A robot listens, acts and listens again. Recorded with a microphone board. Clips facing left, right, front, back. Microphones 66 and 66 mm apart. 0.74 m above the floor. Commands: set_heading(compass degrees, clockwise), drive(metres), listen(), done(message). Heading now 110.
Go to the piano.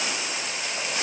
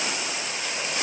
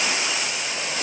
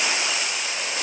listen()
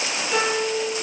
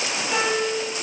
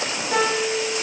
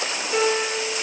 set_heading(120)
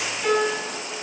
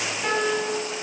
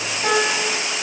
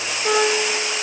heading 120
set_heading(130)
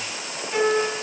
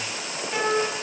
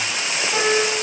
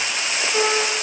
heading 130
drive(1.0)
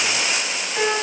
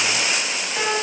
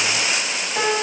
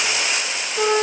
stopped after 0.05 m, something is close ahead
done("Blocked. The piano is further on, straight ahead.")